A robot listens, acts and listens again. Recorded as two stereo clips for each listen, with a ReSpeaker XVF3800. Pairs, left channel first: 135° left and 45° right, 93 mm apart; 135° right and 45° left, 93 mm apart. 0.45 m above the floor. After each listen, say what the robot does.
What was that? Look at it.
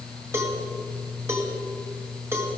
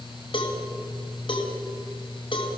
Turn 105° right.
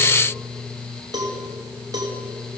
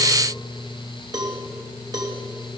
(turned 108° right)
Facing the cowbell, 2 to 4 m away.